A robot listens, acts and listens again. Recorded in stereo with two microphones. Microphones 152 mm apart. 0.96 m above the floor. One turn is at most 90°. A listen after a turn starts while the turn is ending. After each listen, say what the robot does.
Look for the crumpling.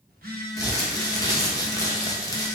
Turn 25° left.
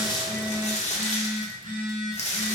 Turn 90° left.
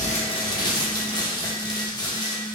Turn 30° left.
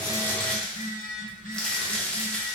Found it: crumpling, straight ahead.